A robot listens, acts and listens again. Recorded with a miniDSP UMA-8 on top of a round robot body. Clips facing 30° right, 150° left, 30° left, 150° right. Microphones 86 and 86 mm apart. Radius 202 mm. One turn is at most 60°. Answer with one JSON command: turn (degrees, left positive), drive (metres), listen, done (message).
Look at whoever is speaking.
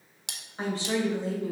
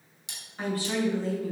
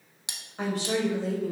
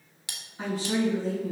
{"turn": 40}
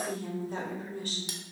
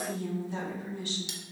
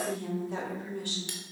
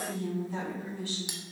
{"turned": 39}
{"turn": 15}
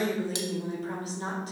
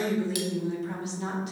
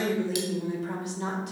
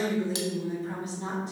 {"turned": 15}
{"turn": 20}
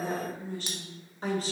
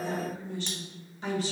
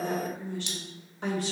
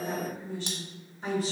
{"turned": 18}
{"turn": 15}
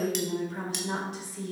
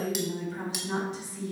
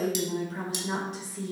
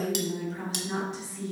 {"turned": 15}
{"done": "Found it: a woman speaking, straight ahead, 2 to 4 m away."}